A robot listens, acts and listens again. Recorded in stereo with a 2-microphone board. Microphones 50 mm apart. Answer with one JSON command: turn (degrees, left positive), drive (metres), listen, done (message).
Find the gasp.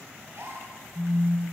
{"turn": -60}
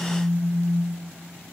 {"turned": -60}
{"listen": true}
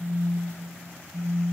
{"done": "I heard a gasp, but can't make it out now. It was about straight ahead or 60° right."}